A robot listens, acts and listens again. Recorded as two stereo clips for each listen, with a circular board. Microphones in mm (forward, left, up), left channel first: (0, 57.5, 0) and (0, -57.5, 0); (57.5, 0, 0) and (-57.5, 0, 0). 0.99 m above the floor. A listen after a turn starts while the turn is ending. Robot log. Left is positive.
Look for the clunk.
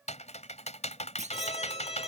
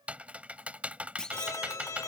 note: The clunk: 85° right.
cmd yaw -85
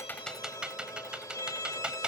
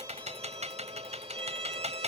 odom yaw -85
end: Facing where the clunk came from. I can't hear it now.